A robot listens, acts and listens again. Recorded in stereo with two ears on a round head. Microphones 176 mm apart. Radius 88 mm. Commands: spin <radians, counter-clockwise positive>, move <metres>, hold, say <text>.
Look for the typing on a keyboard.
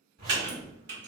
spin -0.96
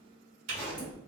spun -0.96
spin -1.13
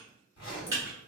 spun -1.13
spin -0.35
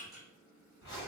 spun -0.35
hold
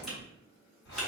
hold
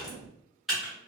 say Found it: typing on a keyboard, straight ahead.